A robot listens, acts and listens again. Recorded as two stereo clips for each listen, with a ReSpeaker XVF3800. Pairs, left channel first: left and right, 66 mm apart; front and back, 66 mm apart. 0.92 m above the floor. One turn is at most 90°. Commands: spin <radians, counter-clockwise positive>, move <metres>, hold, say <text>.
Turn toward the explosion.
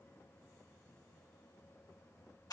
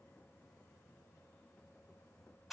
hold
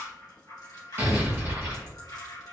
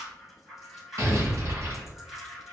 spin -1.57
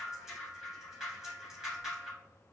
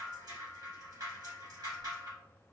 spin -0.87
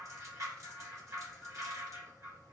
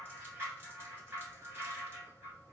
say I heard an explosion from this way, but can't make it out now.